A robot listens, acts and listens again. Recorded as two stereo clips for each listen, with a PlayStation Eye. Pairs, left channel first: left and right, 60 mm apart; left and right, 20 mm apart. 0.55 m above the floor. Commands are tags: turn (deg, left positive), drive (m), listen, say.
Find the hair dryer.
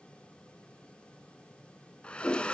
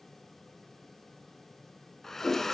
<turn deg="20"/>
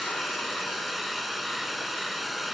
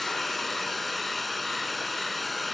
<say>Found it: a hair dryer, straight ahead.</say>